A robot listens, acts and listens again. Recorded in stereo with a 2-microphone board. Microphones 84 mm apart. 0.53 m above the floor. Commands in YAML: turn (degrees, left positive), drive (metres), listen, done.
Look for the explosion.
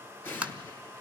turn: 25
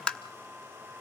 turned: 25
listen: true
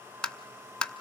done: "I heard an explosion, but can't make it out now. It was about straight ahead or 130° left."